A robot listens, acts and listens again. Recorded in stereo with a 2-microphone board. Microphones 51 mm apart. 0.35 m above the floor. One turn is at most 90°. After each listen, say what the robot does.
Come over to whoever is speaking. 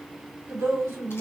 Turn 65° right.
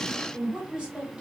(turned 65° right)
Turn 20° right.
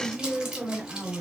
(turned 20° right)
Drive 1.0 m forward.
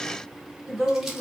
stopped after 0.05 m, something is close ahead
Something is in my way. I am facing the woman speaking but have not reached it.